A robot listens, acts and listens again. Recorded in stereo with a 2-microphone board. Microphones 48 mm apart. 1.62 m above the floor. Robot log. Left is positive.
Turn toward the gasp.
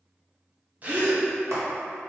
note: The gasp: about 30° right or 150° right.
cmd yaw -30
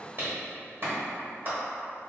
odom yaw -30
cmd idle
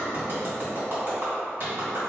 end: I heard a gasp, but can't make it out now. It was about straight ahead or 120° right.